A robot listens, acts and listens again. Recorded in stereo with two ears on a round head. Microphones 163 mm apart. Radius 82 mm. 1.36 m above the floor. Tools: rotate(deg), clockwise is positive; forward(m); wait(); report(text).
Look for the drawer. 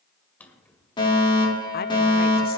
rotate(-30)
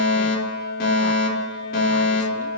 wait()
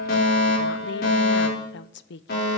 wait()
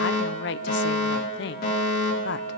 report("I heard a drawer, but can't make it out now. It was about 20° right or 140° left.")